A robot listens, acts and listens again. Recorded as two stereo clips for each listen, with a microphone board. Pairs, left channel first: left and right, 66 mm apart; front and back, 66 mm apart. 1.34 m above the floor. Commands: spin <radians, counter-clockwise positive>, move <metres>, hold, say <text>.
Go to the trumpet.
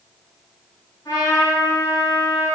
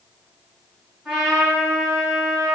spin 1.66
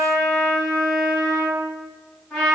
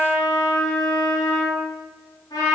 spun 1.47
spin 0.17
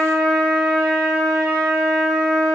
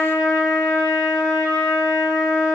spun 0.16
move 1.0
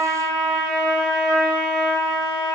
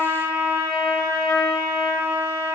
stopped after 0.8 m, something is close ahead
say Arrived at the trumpet, straight ahead.